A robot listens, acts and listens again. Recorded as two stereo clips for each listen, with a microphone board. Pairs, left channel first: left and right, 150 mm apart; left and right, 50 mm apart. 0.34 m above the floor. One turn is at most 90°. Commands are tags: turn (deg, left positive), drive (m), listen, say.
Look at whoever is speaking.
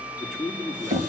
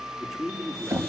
<turn deg="30"/>
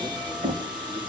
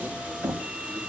<listen/>
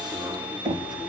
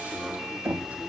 <listen/>
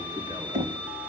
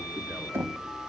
<say>I heard a man speaking, but can't make it out now. It was about 30° right or 150° left.</say>